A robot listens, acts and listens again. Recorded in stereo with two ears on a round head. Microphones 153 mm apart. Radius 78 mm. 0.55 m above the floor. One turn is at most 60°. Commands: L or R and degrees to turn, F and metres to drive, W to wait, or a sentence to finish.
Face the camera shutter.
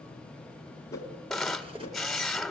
L30
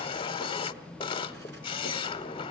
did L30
L60
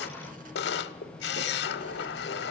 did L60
L60
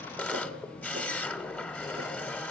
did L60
L10
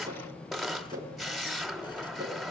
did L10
Facing the camera shutter, 1 to 2 m away.